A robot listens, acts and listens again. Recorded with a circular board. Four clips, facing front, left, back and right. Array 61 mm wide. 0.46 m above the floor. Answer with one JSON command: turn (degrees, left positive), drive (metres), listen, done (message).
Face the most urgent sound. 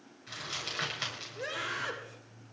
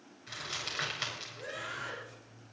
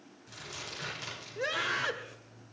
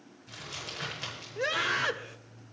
{"turn": -115}
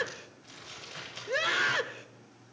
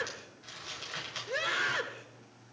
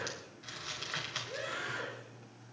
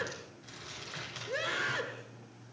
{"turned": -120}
{"turn": 10}
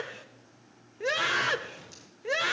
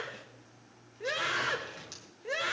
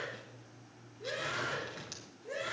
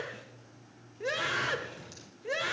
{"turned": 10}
{"done": "Found it: a scream, straight ahead, 1 to 2 m away."}